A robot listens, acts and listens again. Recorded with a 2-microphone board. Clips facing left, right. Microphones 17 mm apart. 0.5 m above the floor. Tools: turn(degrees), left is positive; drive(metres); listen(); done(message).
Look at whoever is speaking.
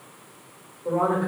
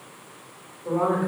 turn(degrees=40)
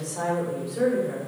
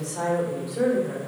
done("Found it: a woman speaking, straight ahead, 1 to 2 m away.")